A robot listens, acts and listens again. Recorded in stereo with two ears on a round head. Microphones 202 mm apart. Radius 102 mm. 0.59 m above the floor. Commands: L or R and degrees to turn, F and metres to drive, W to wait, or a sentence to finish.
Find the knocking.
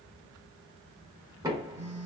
R15
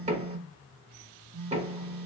R150
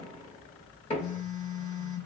L25
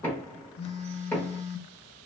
L10
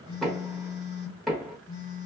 Facing the knocking.